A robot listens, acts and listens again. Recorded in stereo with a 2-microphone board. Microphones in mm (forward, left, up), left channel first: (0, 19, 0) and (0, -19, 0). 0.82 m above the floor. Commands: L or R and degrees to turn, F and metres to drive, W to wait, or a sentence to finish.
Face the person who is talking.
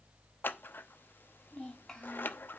L30
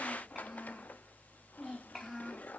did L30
Found it: a child speaking, straight ahead, 2 to 4 m away.